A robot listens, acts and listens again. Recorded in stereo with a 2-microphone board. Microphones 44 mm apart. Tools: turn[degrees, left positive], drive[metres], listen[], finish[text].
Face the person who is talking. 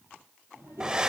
Thought: The child speaking: about 60° right or 120° right.
Action: turn[-60]
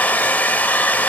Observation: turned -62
Action: listen[]
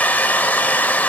Action: listen[]
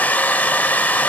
Action: finish[I heard a child speaking, but can't make it out now. It was about 5° left or 60° right.]